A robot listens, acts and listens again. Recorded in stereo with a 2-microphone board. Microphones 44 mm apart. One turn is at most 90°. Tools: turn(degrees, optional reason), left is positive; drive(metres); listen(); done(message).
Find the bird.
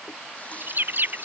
turn(degrees=-50, reason="The bird: about 50° right or 130° right.")
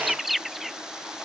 done("Found it: a bird, straight ahead.")